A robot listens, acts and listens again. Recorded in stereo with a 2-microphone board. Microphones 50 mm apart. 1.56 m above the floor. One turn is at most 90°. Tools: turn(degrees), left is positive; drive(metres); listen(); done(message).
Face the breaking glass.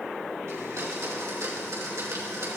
listen()
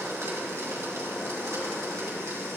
listen()
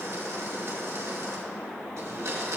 done("I can't make out breaking glass, only a blender.")